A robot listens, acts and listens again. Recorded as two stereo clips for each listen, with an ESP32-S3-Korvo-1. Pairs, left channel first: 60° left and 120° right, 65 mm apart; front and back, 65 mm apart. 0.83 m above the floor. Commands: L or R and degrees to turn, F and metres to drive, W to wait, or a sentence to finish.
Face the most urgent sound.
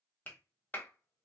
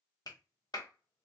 W
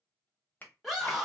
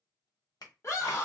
R35
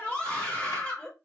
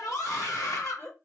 Found it: a scream, straight ahead, 1 to 2 m away.